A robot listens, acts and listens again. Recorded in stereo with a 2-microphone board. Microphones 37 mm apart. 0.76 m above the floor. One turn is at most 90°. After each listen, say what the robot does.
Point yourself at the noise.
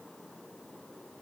Keep listening.
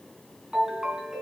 Turn 15° right.
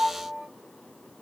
Found it: a ringtone, straight ahead, over 4 m away.